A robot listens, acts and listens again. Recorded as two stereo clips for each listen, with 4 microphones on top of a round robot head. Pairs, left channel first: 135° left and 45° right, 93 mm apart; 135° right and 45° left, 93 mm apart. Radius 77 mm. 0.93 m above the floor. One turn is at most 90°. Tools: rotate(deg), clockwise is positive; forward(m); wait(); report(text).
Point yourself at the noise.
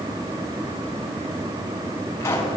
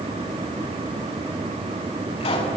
rotate(90)
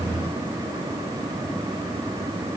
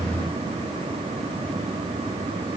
rotate(70)
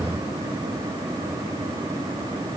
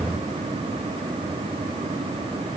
report("I heard a pop from this way, but can't make it out now.")